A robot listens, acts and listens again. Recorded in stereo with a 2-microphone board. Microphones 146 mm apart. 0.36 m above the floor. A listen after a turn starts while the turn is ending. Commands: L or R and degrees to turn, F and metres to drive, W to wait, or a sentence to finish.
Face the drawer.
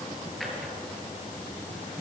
L30
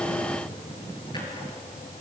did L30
W
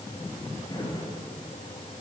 L150
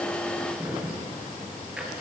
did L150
R10
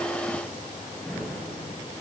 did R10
Facing the drawer, over 4 m away.